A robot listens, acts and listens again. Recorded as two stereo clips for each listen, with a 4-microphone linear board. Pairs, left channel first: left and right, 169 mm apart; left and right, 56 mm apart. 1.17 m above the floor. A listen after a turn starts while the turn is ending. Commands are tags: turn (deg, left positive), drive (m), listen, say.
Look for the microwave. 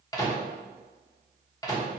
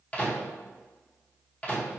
<turn deg="20"/>
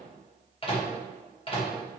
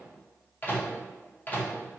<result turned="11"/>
<turn deg="145"/>
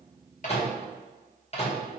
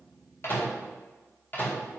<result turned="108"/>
<turn deg="40"/>
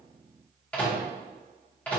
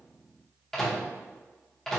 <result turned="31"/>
<turn deg="10"/>
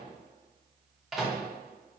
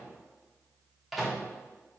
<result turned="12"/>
<say>Found it: a microwave, straight ahead, under 1 m away.</say>